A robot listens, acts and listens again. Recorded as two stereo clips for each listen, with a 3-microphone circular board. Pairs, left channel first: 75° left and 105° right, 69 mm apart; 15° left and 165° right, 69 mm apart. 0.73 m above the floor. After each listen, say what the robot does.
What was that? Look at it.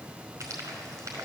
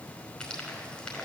Turn 65° right.
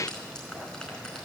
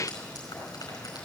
Facing the frying, over 4 m away.